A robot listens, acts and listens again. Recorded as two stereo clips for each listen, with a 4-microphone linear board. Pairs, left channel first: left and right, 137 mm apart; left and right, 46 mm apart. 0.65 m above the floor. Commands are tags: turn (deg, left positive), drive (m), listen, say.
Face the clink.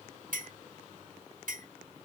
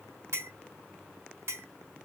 <turn deg="-75"/>
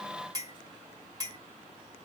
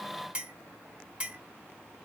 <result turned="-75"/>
<turn deg="-25"/>
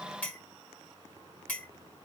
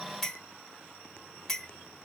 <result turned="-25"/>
<turn deg="10"/>
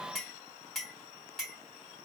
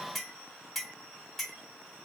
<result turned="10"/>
<say>Facing the clink.</say>